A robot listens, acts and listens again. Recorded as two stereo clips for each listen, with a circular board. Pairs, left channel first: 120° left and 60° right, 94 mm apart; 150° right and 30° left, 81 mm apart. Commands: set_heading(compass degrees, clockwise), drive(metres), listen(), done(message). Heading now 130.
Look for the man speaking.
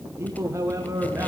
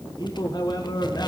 set_heading(245)
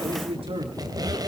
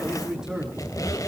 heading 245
set_heading(295)
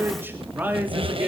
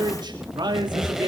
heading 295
set_heading(280)
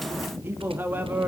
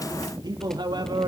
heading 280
set_heading(270)
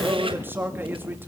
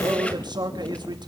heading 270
set_heading(260)
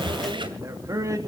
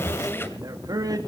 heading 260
done("Found it: a man speaking, straight ahead, 2 to 4 m away.")